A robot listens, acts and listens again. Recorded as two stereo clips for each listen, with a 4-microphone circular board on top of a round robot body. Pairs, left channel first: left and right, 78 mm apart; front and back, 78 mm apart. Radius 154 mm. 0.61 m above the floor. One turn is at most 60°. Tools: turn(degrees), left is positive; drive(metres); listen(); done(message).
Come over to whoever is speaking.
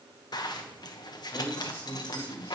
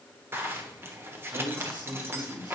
turn(degrees=60)
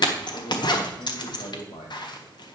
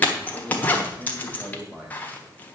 turn(degrees=60)
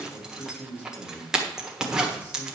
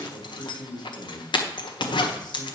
turn(degrees=25)
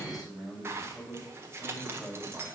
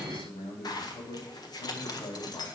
drive(metres=1.0)
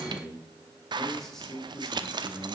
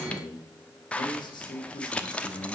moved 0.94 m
drive(metres=1.0)
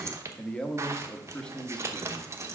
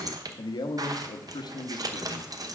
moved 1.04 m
turn(degrees=15)
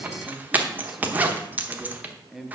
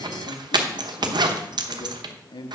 drive(metres=1.0)
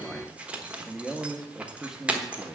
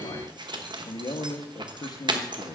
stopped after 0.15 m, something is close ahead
done("Arrived at the man speaking, straight ahead.")